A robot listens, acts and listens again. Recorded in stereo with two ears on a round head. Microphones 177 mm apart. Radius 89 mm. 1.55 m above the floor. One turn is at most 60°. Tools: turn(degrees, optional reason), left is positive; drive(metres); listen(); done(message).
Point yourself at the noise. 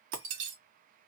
turn(degrees=-60, reason="The breaking glass: about 75° right or 105° right.")
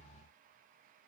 listen()
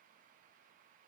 done("I heard breaking glass, but can't make it out now. It was about 15° right or 45° right.")